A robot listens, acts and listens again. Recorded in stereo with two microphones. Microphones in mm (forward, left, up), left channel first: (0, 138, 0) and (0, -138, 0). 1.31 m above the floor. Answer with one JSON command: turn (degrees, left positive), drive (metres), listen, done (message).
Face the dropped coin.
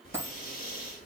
{"turn": -30}
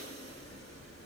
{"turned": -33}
{"listen": true}
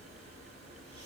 {"done": "I heard a dropped coin, but can't make it out now. It was about 25° left or 140° right."}